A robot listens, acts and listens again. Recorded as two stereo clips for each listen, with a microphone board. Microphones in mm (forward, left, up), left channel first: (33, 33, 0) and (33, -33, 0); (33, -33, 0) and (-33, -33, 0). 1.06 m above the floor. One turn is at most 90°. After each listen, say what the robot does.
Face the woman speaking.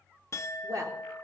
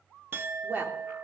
Turn 90° right.
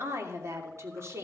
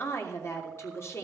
Turn 45° right.
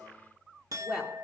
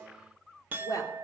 Turn 10° right.
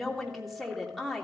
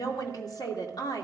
Facing the woman speaking.